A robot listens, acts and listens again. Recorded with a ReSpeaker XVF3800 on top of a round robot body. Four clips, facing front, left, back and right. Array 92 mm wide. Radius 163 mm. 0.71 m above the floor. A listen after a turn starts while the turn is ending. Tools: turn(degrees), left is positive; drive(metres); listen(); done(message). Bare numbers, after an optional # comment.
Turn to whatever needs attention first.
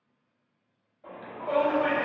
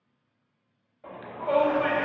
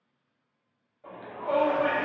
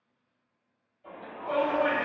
# The shout: 85° left.
turn(85)
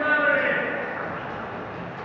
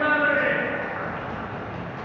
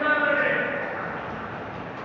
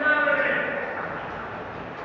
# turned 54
# The shout is now 30° left.
turn(30)
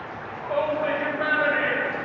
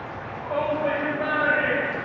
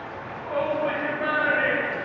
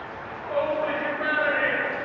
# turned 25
done("Found it: a shout, straight ahead, under 1 m away.")